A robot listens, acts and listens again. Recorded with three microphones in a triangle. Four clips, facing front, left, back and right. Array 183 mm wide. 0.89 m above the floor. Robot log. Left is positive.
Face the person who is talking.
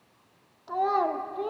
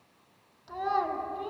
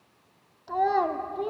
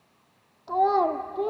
note: The child speaking: 95° right.
cmd yaw -95
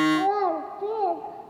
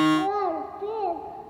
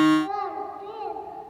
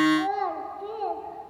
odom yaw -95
note: The child speaking is now 25° left.
cmd yaw +25
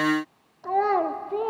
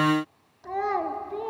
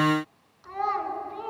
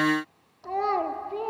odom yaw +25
note: The child speaking is now 10° right.
cmd yaw -10
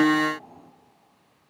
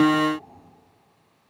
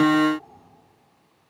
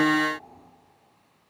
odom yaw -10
cmd idle
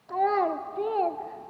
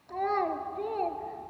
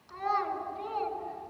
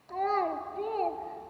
end: Found it: a child speaking, straight ahead, 1 to 2 m away.